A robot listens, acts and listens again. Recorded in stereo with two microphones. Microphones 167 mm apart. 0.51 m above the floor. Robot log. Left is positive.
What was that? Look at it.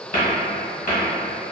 note: The cupboard door: about 55° left or 125° left.
cmd yaw +55
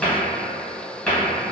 end: Found it: a cupboard door, straight ahead.